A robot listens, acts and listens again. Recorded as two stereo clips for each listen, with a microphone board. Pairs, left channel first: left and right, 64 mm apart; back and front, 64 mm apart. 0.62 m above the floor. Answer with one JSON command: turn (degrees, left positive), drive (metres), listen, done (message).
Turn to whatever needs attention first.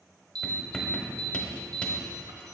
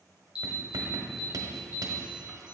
{"turn": -75}
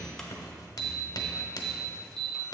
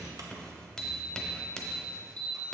{"turn": 10}
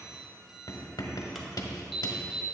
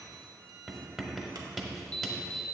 {"done": "Facing the alarm, 1 to 2 m away."}